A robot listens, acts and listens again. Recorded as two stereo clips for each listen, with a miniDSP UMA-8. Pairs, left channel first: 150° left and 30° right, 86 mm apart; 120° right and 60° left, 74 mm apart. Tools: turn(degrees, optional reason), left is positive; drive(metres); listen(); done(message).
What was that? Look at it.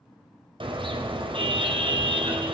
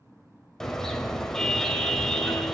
turn(degrees=-35, reason="The car horn: 35° right.")
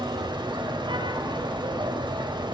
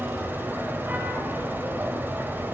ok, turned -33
done("Found it: a car horn, straight ahead, 2 to 4 m away.")